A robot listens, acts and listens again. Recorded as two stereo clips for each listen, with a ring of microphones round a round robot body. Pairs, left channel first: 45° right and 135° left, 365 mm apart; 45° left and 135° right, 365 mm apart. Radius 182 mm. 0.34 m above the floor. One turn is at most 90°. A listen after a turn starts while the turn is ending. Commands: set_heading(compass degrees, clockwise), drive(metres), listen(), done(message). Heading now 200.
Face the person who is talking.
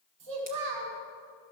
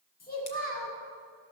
set_heading(110)
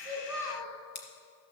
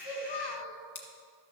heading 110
set_heading(80)
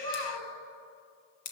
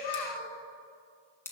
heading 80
done("Facing the child speaking, 1 to 2 m away.")